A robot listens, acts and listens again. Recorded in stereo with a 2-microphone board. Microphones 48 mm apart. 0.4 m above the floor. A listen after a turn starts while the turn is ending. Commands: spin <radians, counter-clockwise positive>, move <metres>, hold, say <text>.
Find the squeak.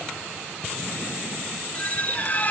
spin 0.61
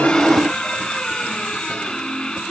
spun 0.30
spin 0.35
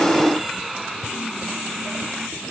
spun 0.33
say Facing the squeak.